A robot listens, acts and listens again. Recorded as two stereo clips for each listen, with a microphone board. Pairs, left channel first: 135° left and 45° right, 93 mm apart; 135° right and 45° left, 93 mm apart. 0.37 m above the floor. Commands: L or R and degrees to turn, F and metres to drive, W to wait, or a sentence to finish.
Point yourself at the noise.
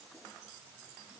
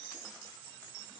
W
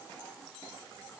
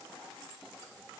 W
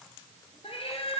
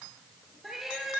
L130
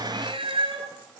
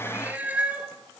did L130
R30
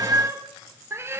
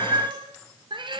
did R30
L15
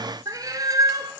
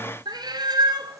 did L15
Found it: a cat meowing, straight ahead, 1 to 2 m away.